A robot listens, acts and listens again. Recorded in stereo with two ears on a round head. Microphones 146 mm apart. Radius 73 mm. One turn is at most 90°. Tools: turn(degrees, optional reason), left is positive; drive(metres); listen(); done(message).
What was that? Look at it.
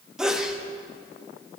turn(degrees=-30)
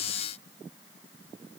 listen()
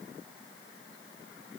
done("I heard a sneeze, but can't make it out now. It was about 25° left or 145° right.")